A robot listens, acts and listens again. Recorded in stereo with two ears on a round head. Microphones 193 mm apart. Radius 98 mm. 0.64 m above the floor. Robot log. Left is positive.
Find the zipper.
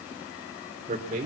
cmd idle
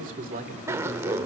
cmd yaw -30
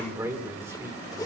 cmd idle
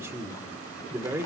cmd idle
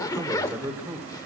note: So it is at 15° left.
cmd yaw +15
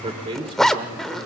end: Facing the zipper, under 1 m away.